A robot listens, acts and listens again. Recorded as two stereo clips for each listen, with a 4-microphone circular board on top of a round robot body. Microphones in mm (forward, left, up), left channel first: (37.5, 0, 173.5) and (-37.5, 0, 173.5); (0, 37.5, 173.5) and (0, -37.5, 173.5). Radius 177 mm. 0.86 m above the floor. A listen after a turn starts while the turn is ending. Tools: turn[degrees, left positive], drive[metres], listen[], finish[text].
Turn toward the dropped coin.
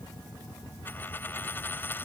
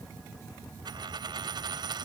Thought: The dropped coin: 65° right.
Action: turn[-65]
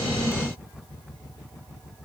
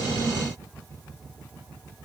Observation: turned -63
Action: finish[Facing where the dropped coin came from. I can't hear it now.]